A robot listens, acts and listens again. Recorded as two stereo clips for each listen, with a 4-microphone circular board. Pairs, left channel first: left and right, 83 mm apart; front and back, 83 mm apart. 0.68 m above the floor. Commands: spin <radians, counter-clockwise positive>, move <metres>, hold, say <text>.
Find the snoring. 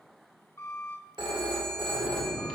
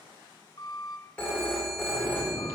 say Found it: snoring, straight ahead.